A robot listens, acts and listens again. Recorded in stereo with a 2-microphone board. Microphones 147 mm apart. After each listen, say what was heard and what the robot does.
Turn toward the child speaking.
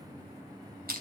Keep listening.
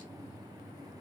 Keep listening.
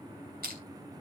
I can't make out a child speaking, only crushing.